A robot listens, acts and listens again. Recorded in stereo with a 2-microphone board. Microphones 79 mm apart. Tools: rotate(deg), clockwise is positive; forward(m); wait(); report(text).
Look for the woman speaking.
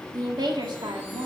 rotate(75)
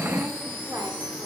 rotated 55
wait()
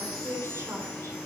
rotate(40)
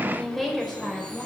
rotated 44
report("Facing the woman speaking, over 4 m away.")